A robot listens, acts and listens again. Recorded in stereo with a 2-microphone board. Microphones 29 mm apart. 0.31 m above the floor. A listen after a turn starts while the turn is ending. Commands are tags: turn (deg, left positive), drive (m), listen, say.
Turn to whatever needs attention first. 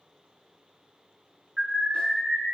<turn deg="-20"/>
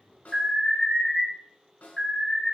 <say>Facing the alarm, 1 to 2 m away.</say>